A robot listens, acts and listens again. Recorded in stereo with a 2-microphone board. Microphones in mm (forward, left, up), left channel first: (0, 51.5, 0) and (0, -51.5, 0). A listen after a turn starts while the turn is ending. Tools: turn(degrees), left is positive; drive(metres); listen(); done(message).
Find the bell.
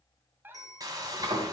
turn(degrees=35)
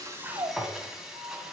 listen()
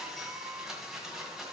listen()
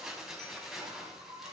done("I heard a bell, but can't make it out now. It was about straight ahead or 110° left.")